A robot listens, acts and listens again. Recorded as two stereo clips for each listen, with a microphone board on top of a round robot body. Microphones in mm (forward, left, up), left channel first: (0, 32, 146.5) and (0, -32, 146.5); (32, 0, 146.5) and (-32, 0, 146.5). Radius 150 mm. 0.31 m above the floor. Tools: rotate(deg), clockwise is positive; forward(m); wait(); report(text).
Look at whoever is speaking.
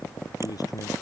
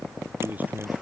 rotate(-115)
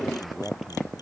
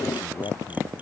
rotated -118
report("Found it: a man speaking, straight ahead.")